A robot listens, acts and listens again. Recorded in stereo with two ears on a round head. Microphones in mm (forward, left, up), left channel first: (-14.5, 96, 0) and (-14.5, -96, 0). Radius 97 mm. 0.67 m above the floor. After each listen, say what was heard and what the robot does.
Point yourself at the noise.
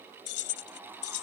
Turn 90° left.
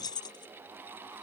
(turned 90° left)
So it is at 20° left. Turn 20° left.
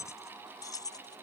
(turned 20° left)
The keys jangling is now 20° left. Turn 20° left.
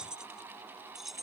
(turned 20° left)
Facing the keys jangling.